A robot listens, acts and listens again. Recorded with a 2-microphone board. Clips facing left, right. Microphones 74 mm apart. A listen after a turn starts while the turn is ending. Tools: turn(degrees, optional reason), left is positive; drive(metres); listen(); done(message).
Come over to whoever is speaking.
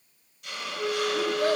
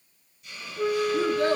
turn(degrees=-55, reason="The child speaking: about 55° right or 125° right.")
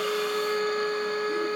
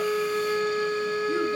listen()
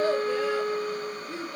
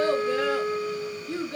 turn(degrees=-70, reason="So it is at 70° right.")
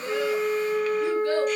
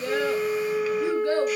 listen()
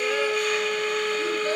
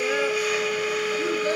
listen()
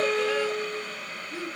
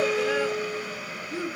turn(degrees=-15, reason="The child speaking is now 15° right.")
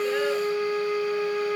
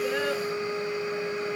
listen()
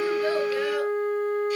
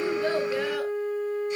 listen()
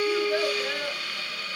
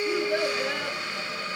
done("Facing where the child speaking came from. I can't hear it now. I did not reach it.")